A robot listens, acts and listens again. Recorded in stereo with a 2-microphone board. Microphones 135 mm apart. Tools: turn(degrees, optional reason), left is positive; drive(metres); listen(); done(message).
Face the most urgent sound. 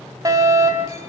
turn(degrees=-25, reason="The fire alarm: about 25° right or 155° right.")
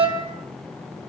turn(degrees=-125, reason="So it is at 125° right.")
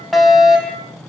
done("Facing the fire alarm.")